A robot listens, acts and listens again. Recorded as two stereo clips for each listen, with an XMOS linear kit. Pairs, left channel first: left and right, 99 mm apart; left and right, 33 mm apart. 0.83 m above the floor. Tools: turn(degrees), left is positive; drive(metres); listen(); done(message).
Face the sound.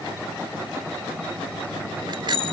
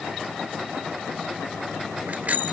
turn(degrees=-55)
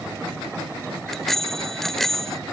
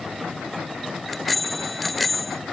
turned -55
done("Facing the bicycle bell.")